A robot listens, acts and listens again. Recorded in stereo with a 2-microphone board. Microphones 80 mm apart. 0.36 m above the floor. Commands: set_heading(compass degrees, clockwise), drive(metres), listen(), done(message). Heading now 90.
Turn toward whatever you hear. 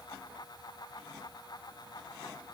listen()
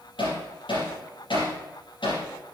set_heading(0)
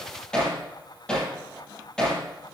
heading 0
set_heading(350)
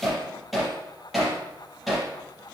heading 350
done("Facing the hammering, over 4 m away.")